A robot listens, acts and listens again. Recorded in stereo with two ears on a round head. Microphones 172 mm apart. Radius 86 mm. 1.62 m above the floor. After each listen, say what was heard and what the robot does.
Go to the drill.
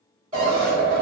The drill: about 40° right or 140° right. Turn 40° right.
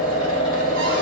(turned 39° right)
Drive 1.0 m forward.
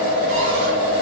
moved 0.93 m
The drill is now 10° right. Turn 10° right.
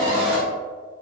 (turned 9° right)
Drive 1.0 m forward.
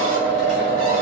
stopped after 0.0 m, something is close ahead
I am next to the drill.